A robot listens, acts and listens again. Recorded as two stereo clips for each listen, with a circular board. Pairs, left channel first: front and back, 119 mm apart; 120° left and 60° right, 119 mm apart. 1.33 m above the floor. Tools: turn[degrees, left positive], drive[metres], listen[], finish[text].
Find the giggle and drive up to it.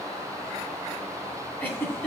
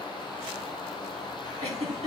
Thought: The giggle: 70° right.
Action: turn[-70]
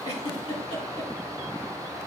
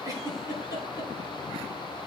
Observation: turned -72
Action: drive[1.0]
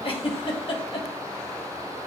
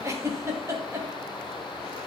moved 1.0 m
Action: drive[1.0]
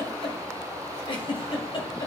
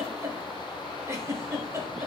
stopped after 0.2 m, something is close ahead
Action: finish[Arrived at the giggle, straight ahead.]